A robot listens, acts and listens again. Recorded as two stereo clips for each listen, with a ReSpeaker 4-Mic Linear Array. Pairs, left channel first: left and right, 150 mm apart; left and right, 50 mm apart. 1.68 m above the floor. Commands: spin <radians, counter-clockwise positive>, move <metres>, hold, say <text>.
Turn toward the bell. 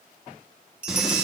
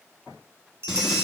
spin -1.13
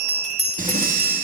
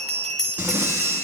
say Found it: a bell, straight ahead, 2 to 4 m away.